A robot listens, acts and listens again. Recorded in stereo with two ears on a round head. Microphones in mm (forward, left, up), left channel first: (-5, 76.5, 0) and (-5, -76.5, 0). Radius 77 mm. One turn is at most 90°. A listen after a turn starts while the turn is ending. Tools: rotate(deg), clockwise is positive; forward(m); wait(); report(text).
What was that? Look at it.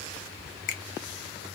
rotate(-50)
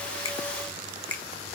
rotate(-10)
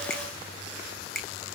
report("Facing the finger snap.")